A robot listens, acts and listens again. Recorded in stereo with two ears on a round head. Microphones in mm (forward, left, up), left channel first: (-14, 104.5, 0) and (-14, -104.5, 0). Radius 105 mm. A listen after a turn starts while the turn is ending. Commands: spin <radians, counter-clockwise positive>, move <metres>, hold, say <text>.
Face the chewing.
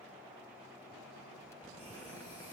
hold
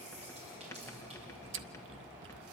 spin -0.96
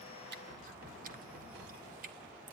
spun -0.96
spin -0.79
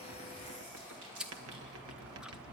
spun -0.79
say Facing the chewing, under 1 m away.